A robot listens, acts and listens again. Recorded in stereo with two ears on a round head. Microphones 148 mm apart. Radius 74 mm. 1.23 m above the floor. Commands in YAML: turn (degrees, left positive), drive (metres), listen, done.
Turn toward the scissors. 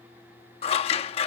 turn: 35
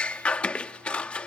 turn: 10
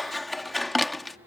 done: "Found it: scissors, straight ahead."